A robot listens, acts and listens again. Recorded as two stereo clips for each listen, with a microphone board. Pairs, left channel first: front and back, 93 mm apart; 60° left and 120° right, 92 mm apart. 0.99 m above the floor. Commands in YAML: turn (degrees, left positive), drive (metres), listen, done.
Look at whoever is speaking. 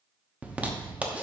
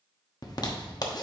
listen: true
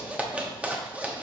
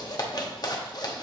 listen: true
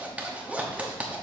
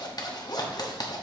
done: "I can't make out anyone speaking, only a zipper."